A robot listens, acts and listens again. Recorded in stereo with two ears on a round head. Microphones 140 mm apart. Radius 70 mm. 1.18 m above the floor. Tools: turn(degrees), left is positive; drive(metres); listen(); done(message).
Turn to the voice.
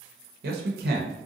turn(degrees=-75)
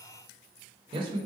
turn(degrees=-35)
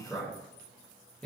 done("Found it: a man speaking, straight ahead.")